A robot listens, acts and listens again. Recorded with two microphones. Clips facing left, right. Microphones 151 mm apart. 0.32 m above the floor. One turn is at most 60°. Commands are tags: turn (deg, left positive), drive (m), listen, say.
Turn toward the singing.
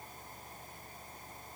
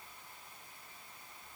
<listen/>
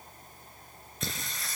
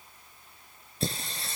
<turn deg="-30"/>
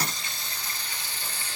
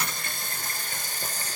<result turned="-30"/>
<turn deg="-60"/>
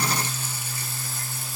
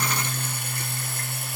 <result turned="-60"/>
<turn deg="-60"/>
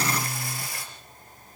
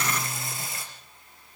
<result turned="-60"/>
<turn deg="-25"/>
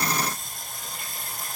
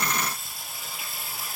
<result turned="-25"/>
<say>Found it: singing, straight ahead.</say>